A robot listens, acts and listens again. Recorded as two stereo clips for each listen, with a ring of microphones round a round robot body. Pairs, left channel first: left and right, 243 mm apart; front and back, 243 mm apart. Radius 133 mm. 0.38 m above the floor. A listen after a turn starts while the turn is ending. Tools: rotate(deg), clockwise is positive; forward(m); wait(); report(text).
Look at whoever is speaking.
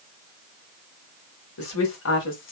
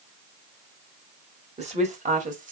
rotate(-125)
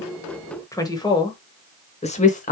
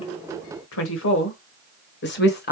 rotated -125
rotate(-40)
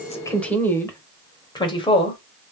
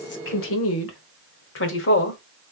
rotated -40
rotate(-25)
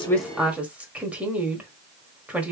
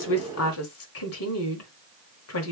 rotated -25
report("Facing the woman speaking, 1 to 2 m away.")